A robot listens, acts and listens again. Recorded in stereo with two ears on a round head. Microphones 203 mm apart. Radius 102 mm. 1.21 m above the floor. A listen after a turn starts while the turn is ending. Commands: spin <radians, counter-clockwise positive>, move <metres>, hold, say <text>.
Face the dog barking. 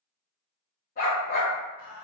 spin 0.79
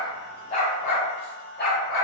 spin 0.79
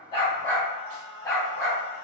spin 0.26
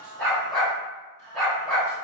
say Found it: a dog barking, straight ahead, 2 to 4 m away.